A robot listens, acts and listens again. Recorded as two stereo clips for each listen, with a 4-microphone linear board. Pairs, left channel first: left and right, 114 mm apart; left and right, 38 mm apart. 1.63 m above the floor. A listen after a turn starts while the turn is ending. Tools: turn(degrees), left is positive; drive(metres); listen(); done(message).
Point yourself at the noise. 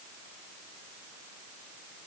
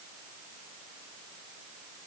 listen()
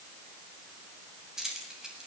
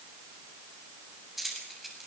turn(degrees=-30)
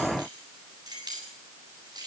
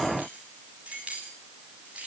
turn(degrees=-145)
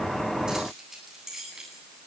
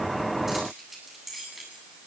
done("Facing the keys jangling.")